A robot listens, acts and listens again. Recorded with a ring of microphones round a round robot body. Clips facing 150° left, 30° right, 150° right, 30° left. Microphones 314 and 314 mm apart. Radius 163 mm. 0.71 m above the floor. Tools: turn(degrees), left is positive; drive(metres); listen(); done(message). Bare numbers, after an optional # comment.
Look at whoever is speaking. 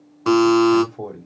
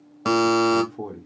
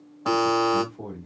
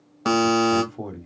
# The man speaking: 40° left.
turn(40)
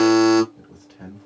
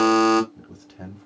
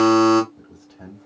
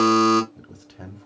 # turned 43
done("Found it: a man speaking, straight ahead, 1 to 2 m away.")